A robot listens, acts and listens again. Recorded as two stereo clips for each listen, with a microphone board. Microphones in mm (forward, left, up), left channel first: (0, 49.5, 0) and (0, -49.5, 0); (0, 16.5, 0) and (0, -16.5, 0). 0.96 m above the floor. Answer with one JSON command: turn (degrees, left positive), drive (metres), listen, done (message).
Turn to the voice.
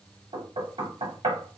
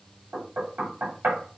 {"listen": true}
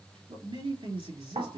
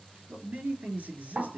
{"turn": -60}
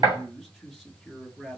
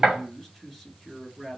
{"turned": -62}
{"done": "Facing the man speaking, 1 to 2 m away."}